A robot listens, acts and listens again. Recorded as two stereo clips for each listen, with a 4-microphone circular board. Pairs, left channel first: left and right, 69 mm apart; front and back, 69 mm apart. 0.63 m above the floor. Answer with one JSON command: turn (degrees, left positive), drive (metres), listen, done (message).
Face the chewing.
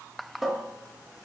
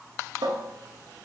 {"listen": true}
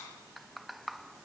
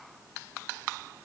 {"listen": true}
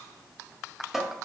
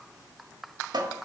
{"done": "I can't make out chewing to turn to."}